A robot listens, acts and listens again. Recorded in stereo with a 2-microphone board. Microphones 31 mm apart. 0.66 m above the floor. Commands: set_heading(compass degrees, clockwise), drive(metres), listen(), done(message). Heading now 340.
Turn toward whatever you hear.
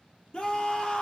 set_heading(310)
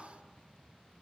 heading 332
listen()
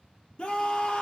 set_heading(297)
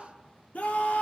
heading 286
set_heading(191)
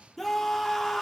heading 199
done("Facing the scream, 1 to 2 m away.")